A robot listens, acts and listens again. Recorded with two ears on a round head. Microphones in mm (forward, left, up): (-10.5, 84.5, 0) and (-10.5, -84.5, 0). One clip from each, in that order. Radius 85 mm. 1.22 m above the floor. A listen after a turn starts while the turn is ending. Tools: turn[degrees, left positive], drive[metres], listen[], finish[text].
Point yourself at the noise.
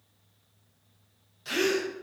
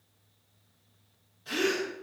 Thought: The gasp: about 45° left or 135° left.
Action: turn[45]
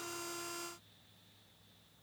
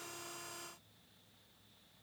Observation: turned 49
Action: listen[]
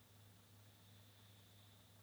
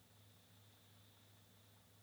Action: finish[I heard a gasp, but can't make it out now. It was about straight ahead or 85° left.]